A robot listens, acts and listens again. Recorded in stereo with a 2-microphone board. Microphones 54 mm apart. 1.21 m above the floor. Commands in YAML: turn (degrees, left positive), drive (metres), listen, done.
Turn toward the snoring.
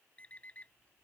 listen: true
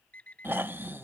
turn: -40
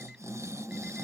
turn: -95
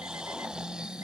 turn: -20
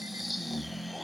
done: "Facing the snoring."